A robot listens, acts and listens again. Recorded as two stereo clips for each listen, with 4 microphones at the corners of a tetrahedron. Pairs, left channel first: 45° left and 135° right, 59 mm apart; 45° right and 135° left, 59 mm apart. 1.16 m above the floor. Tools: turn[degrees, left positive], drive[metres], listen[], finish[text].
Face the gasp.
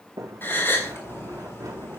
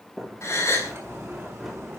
Action: finish[Found it: a gasp, straight ahead, 2 to 4 m away.]